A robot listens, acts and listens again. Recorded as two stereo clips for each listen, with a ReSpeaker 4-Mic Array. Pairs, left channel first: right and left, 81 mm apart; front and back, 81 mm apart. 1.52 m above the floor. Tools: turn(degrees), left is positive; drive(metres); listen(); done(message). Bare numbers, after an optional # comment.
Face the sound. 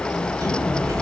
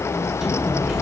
# The sliding door: 95° left.
turn(95)
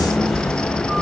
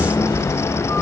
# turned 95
done("Facing the sliding door.")